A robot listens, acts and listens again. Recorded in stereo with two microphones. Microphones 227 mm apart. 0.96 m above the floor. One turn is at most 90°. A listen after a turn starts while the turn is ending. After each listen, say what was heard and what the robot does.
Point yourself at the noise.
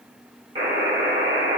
The buzzer: about 25° right or 155° right. Turn 25° right.
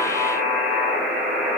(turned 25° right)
Facing the buzzer, 1 to 2 m away.